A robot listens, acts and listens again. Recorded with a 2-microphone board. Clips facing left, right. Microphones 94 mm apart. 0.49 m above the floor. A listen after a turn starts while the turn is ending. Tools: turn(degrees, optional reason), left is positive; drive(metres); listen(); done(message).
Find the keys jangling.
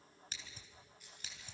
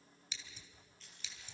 turn(degrees=30)
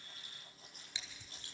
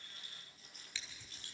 turn(degrees=145, reason="So it is at 145° left.")
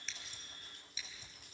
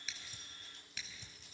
turn(degrees=50, reason="The keys jangling is now 50° left.")
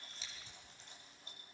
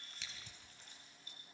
turn(degrees=30, reason="The keys jangling is now 30° left.")
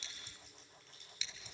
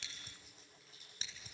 done("Facing the keys jangling, over 4 m away.")